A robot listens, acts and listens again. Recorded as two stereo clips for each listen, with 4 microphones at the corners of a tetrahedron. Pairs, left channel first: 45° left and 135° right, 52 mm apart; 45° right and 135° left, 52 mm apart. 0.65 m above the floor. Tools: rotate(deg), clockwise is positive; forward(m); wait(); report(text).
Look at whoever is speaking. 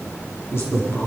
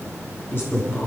report("Facing the man speaking.")